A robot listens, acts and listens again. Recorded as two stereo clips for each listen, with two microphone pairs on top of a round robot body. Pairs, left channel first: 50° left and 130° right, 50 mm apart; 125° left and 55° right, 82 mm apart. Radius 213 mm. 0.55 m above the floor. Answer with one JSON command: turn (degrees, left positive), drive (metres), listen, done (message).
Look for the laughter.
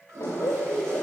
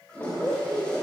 {"turn": 60}
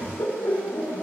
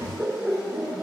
{"turn": 20}
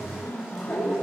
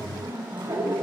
{"done": "Found it: laughter, straight ahead, 2 to 4 m away."}